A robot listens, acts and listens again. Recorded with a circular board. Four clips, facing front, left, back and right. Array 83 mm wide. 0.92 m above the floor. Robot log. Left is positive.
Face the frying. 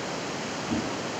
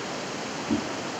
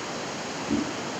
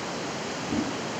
cmd idle
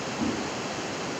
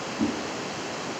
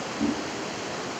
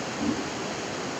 cmd idle
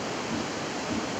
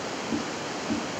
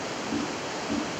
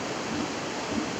end: I can't make out frying, only a whoosh.